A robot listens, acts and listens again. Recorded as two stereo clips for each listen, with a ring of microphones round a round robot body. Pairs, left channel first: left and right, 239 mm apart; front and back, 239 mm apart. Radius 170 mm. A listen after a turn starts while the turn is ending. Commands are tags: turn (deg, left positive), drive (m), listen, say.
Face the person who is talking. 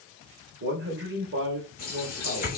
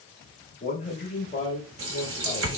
<turn deg="-65"/>
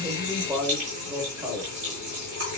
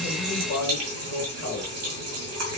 <say>Found it: a man speaking, straight ahead, 1 to 2 m away.</say>